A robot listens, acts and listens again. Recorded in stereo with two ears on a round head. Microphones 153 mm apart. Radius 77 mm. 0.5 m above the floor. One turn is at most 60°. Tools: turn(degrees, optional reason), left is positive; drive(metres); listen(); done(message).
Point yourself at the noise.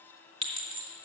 turn(degrees=-35, reason="The clink: about 35° right or 145° right.")
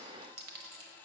turn(degrees=-60, reason="So it is at 110° right.")
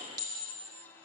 turn(degrees=-25, reason="The clink is now 25° right.")
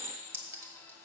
turn(degrees=-15, reason="The clink is now 15° right.")
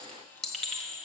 done("Facing the clink.")